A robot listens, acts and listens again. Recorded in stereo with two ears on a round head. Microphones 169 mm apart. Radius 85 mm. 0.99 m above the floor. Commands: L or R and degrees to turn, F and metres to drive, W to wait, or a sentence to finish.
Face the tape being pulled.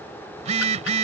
W
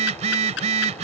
W
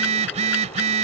I can't make out tape being pulled, only a phone buzzing.